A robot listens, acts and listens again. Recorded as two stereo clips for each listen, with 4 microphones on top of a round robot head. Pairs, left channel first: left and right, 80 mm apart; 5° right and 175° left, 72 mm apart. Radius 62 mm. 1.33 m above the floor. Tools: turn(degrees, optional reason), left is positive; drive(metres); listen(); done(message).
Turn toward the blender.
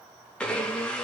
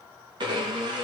turn(degrees=165, reason="The blender: 165° left.")
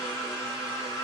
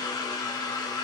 turn(degrees=25, reason="The blender is now 25° left.")
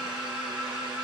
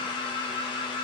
turn(degrees=-10, reason="The blender is now 10° right.")
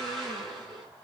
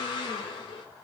done("Facing the blender.")